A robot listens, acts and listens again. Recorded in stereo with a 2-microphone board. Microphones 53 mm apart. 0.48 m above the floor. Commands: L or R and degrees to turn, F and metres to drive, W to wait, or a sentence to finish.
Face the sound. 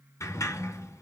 L70
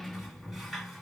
Facing the sliding door, 1 to 2 m away.